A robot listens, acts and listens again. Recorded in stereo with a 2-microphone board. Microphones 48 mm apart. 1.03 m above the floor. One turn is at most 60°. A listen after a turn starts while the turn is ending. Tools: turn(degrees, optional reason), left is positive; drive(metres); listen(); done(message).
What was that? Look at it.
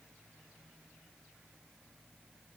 listen()
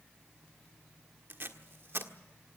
turn(degrees=-50, reason="The tape being pulled: about 50° right or 130° right.")
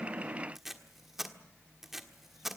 done("Found it: tape being pulled, straight ahead, 1 to 2 m away.")